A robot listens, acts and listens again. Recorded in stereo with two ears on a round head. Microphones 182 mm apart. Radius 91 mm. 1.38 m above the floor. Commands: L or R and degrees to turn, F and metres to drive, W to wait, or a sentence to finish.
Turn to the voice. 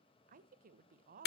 R40
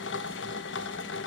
W
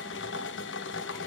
W
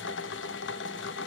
I heard a woman speaking, but can't make it out now. It was about straight ahead or 100° right.